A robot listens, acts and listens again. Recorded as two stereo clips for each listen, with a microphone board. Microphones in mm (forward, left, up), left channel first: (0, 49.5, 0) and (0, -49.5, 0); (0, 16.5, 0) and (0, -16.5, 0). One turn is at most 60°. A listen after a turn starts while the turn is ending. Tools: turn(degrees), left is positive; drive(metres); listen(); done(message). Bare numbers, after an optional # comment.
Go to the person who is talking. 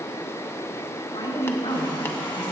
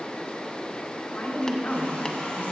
# The woman speaking: about 75° left or 105° left.
turn(60)
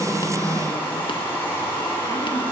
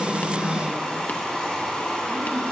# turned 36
listen()
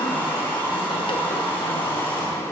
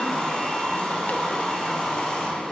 listen()
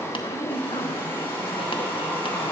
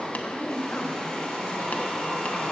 # So it is at 70° left.
turn(60)
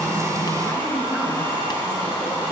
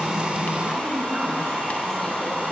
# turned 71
listen()
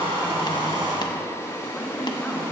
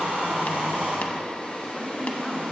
listen()
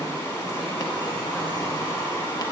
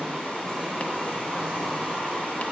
done("Facing where the woman speaking came from. I can't hear it now. I did not reach it.")